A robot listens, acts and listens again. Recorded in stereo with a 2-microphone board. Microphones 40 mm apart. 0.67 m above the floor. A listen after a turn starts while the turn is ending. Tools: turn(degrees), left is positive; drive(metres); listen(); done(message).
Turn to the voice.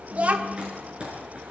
turn(degrees=-35)
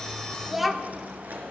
done("Found it: a child speaking, straight ahead.")